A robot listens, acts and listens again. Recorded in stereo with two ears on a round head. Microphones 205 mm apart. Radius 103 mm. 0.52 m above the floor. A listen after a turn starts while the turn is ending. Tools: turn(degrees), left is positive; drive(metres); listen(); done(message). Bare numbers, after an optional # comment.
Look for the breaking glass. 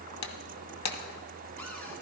turn(90)
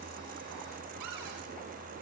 done("Facing where the breaking glass came from. I can't hear it now.")